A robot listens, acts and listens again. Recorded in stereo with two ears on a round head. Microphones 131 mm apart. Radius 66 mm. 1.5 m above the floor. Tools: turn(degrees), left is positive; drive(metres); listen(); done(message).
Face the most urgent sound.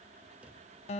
listen()
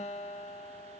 listen()
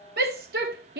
turn(degrees=-70)
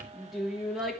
done("Facing the shout.")